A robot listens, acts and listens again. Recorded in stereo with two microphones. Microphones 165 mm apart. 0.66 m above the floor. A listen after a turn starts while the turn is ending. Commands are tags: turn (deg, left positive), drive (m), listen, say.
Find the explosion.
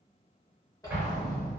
<turn deg="-30"/>
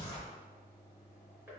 <listen/>
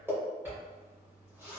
<say>I heard an explosion, but can't make it out now. It was about 20° left or 140° right.</say>